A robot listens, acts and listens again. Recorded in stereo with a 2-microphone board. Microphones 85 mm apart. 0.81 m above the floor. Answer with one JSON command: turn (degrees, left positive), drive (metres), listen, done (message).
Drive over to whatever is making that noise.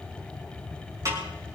{"turn": -40}
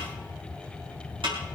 {"turn": -105}
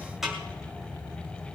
{"drive": 1.0}
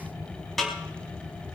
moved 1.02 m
{"drive": 1.0}
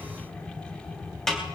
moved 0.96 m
{"drive": 1.0}
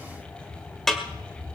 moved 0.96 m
{"drive": 1.0}
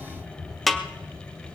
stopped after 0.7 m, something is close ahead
{"done": "Arrived at the snare drum, straight ahead."}